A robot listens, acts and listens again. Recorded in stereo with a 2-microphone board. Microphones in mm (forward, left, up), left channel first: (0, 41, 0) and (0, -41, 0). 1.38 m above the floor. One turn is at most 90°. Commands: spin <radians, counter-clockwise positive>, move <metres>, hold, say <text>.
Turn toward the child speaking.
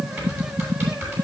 hold
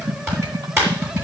hold
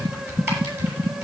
say I can't make out a child speaking to turn to.